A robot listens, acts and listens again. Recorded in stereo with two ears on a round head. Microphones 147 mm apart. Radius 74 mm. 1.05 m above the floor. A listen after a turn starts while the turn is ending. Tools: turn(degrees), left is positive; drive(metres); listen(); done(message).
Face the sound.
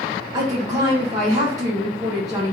turn(degrees=-25)
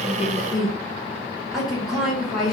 done("Found it: a woman speaking, straight ahead, 1 to 2 m away.")